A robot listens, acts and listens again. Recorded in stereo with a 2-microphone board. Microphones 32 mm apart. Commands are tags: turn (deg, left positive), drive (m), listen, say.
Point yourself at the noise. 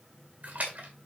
<turn deg="-50"/>
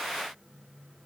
<listen/>
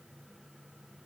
<say>I heard a splash, but can't make it out now. It was about straight ahead or 80° right.</say>